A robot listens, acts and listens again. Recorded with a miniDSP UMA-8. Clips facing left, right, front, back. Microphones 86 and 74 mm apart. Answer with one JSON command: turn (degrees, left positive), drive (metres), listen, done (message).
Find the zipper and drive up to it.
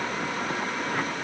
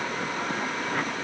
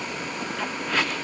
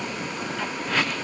{"listen": true}
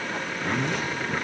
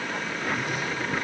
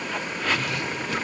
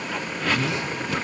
{"turn": 110}
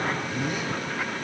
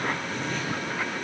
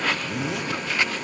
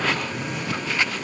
{"turn": 10}
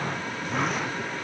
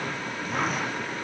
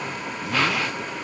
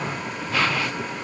{"listen": true}
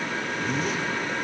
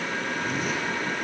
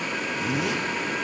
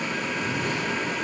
{"drive": 1.0}
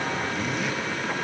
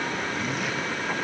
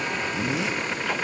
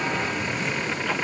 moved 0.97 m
{"drive": 1.0}
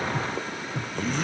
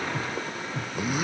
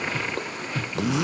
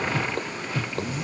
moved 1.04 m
{"turn": -10}
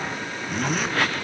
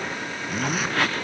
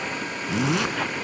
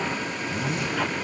{"drive": 1.0}
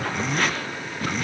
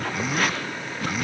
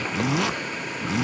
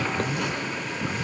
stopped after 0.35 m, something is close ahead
{"done": "Arrived at the zipper, straight ahead."}